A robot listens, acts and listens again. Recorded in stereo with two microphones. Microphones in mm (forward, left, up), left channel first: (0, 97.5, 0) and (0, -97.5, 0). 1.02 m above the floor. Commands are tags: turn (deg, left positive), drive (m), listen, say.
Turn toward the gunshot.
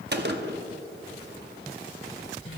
<turn deg="-60"/>
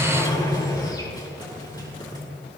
<listen/>
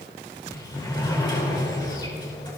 <say>I heard a gunshot, but can't make it out now. It was about straight ahead or 60° right.</say>